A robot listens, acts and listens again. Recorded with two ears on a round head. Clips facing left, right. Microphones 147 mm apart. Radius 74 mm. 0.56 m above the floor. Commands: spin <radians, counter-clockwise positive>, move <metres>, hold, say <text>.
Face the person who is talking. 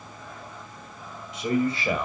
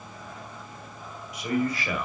spin 0.44
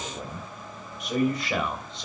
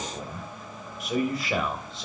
say Found it: a man speaking, straight ahead.